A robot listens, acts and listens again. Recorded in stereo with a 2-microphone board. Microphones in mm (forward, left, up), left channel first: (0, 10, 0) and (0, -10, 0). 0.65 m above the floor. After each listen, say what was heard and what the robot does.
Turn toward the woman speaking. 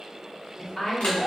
The woman speaking: about 30° left or 150° left. Turn 30° left.
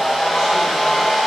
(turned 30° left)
Keep listening.
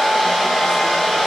Keep listening.
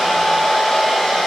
I heard a woman speaking, but can't make it out now. It was about straight ahead or 120° left.